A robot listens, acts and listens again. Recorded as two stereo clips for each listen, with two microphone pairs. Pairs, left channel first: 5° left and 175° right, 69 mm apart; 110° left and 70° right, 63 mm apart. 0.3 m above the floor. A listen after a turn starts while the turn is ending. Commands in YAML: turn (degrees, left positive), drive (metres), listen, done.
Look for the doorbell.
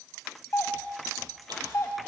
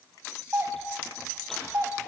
turn: -40
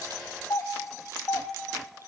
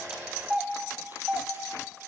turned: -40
done: "Facing the doorbell, 2 to 4 m away."